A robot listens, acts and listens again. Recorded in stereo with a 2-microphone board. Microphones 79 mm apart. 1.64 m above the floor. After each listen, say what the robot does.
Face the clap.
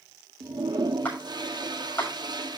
Turn 20° left.
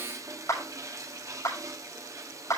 Turn 140° left.
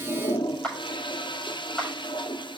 Turn 10° left.
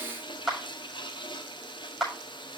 Found it: a clap, straight ahead.